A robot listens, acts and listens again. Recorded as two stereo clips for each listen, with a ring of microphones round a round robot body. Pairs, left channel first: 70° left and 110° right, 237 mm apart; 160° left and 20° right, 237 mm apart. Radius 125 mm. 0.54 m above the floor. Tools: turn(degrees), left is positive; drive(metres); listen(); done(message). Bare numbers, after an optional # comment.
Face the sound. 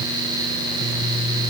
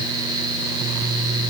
listen()
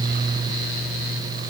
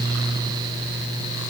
listen()
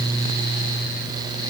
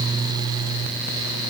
done("I can't make out anything to turn to.")